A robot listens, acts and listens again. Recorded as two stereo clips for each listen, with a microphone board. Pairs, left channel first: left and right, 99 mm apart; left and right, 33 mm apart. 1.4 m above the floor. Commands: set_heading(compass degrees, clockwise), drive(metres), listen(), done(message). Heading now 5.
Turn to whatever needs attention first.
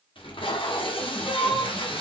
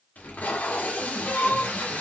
set_heading(300)
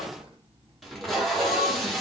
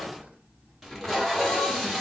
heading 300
listen()
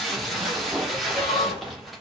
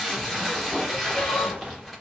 listen()
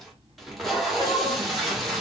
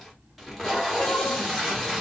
done("I heard crying, but can't make it out now. It was about straight ahead or 50° left.")